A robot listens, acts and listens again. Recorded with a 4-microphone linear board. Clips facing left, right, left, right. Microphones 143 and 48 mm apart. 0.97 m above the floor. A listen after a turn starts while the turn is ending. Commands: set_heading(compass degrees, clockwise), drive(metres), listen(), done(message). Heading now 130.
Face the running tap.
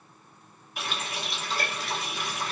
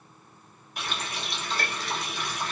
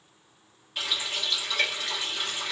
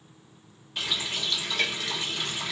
set_heading(100)
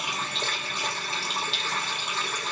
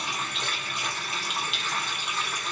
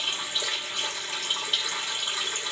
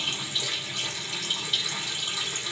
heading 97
set_heading(312)
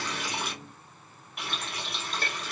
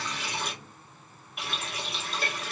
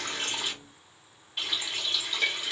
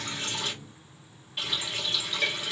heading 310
done("Facing the running tap, 1 to 2 m away.")